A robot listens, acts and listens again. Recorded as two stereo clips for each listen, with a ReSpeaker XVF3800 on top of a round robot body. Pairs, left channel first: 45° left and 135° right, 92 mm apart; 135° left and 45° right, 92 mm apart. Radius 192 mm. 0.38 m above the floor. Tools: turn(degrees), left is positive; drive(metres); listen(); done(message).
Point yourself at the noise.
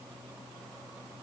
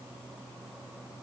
listen()
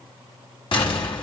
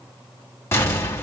turn(degrees=70)
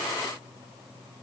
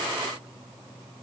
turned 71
done("Facing where the explosion came from. I can't hear it now.")